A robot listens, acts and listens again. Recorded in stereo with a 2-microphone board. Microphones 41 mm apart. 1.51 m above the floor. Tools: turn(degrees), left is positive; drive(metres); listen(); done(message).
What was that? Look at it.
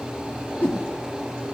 turn(degrees=55)
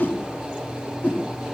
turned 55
turn(degrees=55)
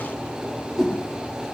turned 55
done("Found it: a whoosh, straight ahead.")